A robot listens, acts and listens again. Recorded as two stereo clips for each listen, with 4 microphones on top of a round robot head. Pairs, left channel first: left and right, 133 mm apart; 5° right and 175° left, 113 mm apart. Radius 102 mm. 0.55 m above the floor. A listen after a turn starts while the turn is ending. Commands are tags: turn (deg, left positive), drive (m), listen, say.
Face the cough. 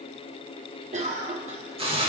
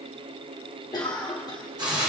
<turn deg="-60"/>
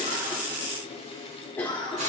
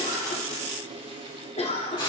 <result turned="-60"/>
<turn deg="15"/>
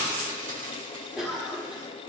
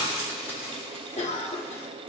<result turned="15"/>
<say>Facing the cough, 1 to 2 m away.</say>